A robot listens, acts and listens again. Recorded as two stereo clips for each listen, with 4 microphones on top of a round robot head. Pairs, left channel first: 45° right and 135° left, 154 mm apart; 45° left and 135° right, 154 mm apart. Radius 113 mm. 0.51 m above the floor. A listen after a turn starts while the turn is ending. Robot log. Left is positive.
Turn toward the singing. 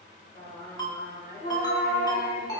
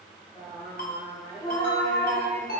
note: The singing: 30° right.
cmd yaw -30
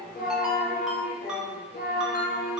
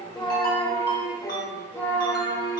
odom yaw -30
note: The singing is now 40° right.
cmd yaw -40
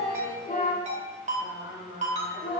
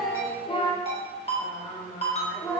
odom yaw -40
note: The singing is now 30° right.
cmd yaw -30
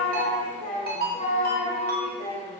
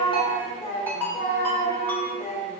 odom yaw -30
end: Found it: singing, straight ahead.